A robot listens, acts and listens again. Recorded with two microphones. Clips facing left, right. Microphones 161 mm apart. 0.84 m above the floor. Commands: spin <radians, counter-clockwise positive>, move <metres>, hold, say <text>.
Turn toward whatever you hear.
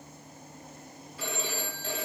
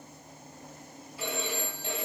spin -0.52
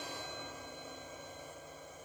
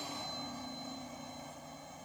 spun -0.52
hold
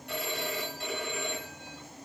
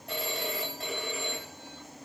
spin -2.53
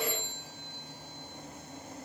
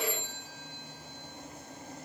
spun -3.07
spin 0.52
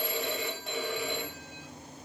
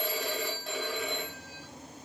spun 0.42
say Facing the phone ringing, 2 to 4 m away.